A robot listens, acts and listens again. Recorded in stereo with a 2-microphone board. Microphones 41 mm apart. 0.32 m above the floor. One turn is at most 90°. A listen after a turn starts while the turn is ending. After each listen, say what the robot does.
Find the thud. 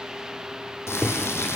Turn 20° left.
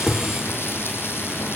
Keep listening.
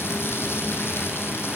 I heard a thud, but can't make it out now. It was about straight ahead or 140° left.